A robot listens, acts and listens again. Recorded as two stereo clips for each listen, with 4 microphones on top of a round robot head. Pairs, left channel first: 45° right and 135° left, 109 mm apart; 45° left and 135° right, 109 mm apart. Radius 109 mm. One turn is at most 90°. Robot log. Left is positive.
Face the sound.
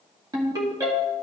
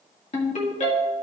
note: The ringtone: 75° left.
cmd yaw +75
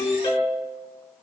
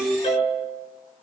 note: The ringtone is now 10° left.
cmd yaw +10
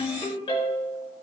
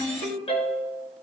end: Facing the ringtone, 1 to 2 m away.